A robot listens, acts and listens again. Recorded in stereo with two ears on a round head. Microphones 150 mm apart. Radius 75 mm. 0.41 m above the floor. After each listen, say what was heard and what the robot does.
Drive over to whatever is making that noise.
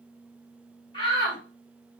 The shout: about 30° left or 150° left. Turn 30° left.
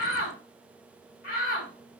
So it is at 115° left. Turn 115° left.
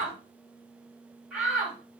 Drive 1.0 m forward.
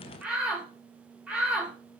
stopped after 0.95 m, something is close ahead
The shout is now 10° right. Turn 10° right.
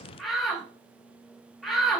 Arrived at the shout, straight ahead.